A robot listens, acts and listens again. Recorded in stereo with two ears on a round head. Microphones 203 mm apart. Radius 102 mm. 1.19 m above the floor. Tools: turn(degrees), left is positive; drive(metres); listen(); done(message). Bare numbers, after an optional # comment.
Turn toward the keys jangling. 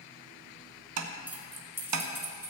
turn(-30)
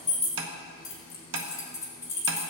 # So it is at 15° left.
turn(15)
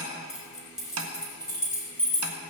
done("Found it: keys jangling, straight ahead, over 4 m away.")